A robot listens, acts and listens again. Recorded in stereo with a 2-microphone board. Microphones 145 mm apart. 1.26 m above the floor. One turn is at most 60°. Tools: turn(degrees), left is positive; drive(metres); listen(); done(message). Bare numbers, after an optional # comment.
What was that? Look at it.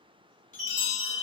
# The chime: about 60° left or 120° left.
turn(60)
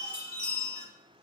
# So it is at 45° left.
turn(45)
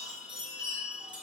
# The chime is now 10° right.
turn(-10)
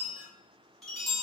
done("Found it: a chime, straight ahead, 1 to 2 m away.")